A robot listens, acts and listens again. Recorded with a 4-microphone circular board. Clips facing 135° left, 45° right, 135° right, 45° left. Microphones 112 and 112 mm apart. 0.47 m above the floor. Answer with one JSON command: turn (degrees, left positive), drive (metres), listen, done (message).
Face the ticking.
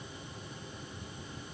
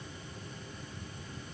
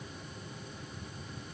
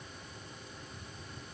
{"listen": true}
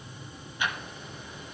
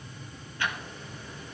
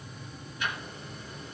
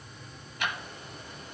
{"turn": 65}
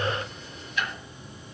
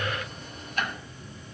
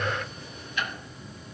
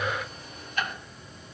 {"done": "Facing the ticking, 1 to 2 m away."}